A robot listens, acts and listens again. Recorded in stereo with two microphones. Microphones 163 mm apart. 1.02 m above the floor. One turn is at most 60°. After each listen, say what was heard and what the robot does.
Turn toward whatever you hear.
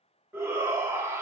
The shout: about 15° right or 165° right. Turn 15° right.
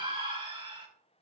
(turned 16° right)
So it is at 150° right. Turn 60° right.
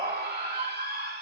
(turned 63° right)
The shout is now 85° right. Turn 60° right.
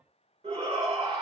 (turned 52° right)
The shout is now 35° right. Turn 35° right.
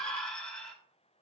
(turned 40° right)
Found it: a shout, straight ahead, 2 to 4 m away.